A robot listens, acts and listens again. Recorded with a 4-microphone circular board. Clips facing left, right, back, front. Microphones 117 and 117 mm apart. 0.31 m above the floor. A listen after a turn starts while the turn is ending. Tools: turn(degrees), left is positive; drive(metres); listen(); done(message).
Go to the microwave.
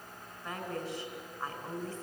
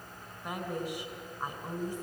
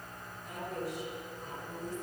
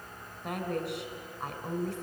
listen()
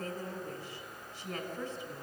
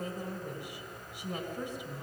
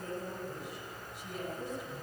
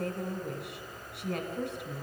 listen()
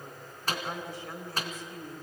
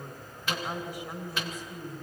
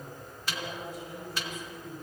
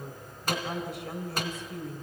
turn(degrees=40)
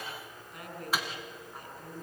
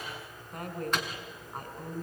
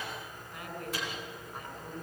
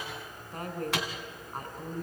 drive(metres=1.0)
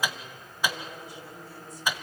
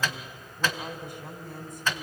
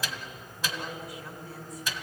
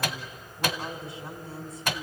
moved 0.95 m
turn(degrees=15)
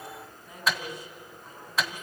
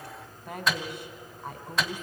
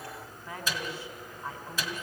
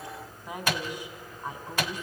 drive(metres=1.0)
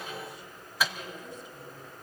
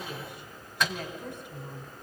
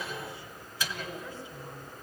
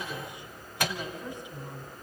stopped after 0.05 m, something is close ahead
done("I am next to the microwave.")